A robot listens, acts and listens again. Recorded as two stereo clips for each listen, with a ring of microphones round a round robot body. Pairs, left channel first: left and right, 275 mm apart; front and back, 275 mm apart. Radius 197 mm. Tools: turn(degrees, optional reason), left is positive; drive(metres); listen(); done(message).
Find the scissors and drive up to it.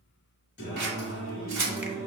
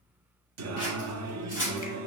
turn(degrees=-75, reason="The scissors: 75° right.")
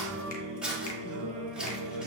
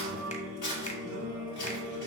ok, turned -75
drive(metres=1.0)
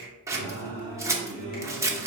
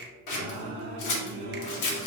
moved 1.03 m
turn(degrees=-10, reason="The scissors is now 10° right.")
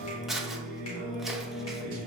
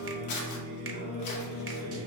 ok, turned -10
drive(metres=1.0)
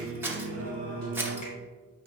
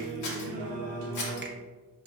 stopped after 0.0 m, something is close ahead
done("I am next to the scissors.")